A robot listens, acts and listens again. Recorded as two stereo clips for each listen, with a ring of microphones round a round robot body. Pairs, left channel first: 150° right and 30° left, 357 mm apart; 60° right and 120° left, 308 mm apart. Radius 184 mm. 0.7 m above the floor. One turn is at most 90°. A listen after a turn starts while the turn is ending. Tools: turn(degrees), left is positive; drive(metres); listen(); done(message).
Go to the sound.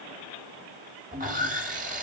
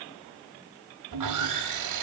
turn(degrees=90)
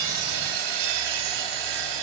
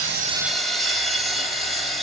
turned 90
turn(degrees=30)
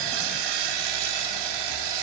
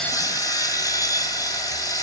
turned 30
turn(degrees=20)
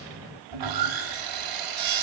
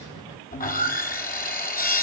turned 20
drive(metres=1.0)
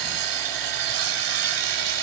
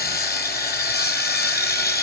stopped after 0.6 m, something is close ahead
done("Something is in my way. I am facing the sawing but have not reached it.")